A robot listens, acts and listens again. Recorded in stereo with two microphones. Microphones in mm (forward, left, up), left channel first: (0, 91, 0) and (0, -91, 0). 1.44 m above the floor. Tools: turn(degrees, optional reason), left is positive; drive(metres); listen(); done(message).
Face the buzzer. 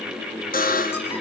turn(degrees=50, reason="The buzzer: about 50° left or 130° left.")
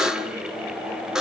done("Facing the buzzer, 1 to 2 m away.")